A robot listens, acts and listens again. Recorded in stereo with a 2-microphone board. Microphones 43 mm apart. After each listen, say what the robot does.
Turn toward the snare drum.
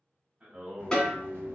Turn 30° left.
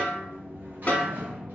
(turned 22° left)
Turn 145° left.
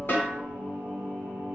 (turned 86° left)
Turn 60° left.
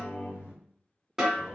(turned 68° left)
Turn 10° right.
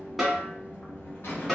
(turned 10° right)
Found it: a snare drum, straight ahead.